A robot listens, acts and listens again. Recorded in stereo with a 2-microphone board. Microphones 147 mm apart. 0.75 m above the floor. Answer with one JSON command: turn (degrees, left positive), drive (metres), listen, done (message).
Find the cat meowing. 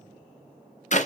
{"listen": true}
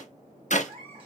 {"turn": -35}
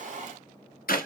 {"listen": true}
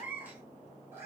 {"turn": -15}
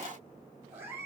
{"turn": -20}
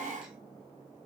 {"listen": true}
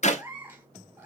{"turn": -10}
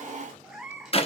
{"done": "Facing the cat meowing, 1 to 2 m away."}